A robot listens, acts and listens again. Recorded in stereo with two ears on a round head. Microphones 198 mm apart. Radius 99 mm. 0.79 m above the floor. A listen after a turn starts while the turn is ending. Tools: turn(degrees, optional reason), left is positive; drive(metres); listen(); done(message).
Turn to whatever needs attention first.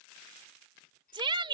turn(degrees=-25, reason="The shout: about 25° right or 155° right.")
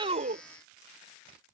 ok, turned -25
listen()
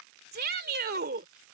turn(degrees=-130, reason="So it is at 130° right.")
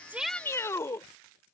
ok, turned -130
turn(degrees=15, reason="The shout is now 15° left.")
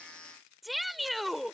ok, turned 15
done("Facing the shout.")